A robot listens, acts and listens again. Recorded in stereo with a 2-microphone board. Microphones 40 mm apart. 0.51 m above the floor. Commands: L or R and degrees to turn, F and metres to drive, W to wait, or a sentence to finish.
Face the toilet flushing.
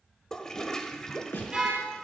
L30
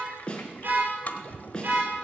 L140
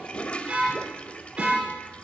L30
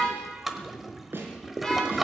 Facing the toilet flushing.